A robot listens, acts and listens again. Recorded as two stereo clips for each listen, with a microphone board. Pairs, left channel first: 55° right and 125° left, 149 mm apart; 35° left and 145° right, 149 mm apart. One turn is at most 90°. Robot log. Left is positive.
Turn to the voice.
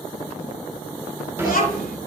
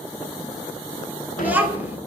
note: The child speaking: 65° right.
cmd yaw -65
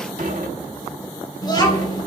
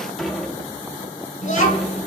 end: Found it: a child speaking, straight ahead.